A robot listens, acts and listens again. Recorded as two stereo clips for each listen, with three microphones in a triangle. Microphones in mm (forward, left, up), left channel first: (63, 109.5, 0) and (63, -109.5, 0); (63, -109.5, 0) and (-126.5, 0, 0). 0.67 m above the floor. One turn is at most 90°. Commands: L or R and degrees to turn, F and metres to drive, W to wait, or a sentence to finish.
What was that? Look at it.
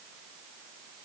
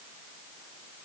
W
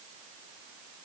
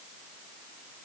W
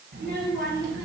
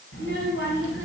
R55
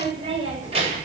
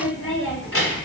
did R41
R30
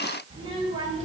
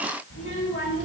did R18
R30
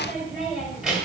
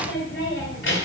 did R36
Facing the child speaking.